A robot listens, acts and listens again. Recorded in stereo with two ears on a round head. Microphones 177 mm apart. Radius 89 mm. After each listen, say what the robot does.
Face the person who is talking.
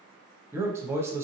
Turn 30° right.
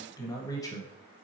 Turn 20° left.
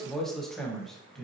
Found it: a man speaking, straight ahead, under 1 m away.